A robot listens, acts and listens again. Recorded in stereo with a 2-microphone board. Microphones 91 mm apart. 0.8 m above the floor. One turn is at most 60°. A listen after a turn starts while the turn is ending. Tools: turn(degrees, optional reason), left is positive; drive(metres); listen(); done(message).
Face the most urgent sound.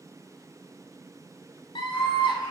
turn(degrees=60, reason="The scream: about 70° left or 110° left.")
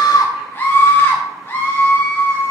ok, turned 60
turn(degrees=25, reason="So it is at 25° left.")
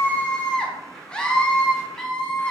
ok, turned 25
turn(degrees=10, reason="The scream is now 10° left.")
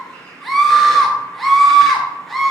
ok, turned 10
done("Found it: a scream, straight ahead, under 1 m away.")